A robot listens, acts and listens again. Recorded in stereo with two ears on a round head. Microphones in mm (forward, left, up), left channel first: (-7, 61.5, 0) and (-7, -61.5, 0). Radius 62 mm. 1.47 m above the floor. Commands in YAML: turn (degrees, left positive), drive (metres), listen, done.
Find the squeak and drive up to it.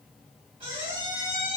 turn: -35
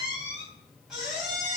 drive: 1.0
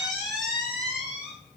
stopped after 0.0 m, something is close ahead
done: "Something is in my way. I am facing the squeak but have not reached it."